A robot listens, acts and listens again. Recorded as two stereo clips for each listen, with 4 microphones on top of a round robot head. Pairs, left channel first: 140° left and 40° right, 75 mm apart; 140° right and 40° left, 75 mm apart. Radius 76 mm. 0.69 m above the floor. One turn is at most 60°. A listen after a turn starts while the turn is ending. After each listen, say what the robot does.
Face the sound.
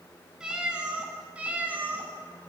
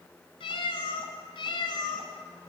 Turn 60° right.
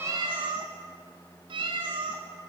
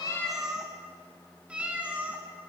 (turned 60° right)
Turn 35° right.
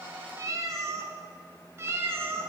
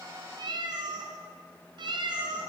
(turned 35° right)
Turn 20° left.
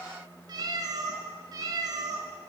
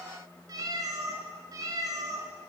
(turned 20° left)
Found it: a cat meowing, straight ahead, 2 to 4 m away.